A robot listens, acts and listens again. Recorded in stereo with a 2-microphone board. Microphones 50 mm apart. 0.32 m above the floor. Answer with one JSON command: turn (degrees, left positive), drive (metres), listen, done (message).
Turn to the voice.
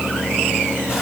{"listen": true}
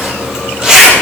{"listen": true}
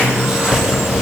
{"done": "I can't make out anyone speaking to turn to."}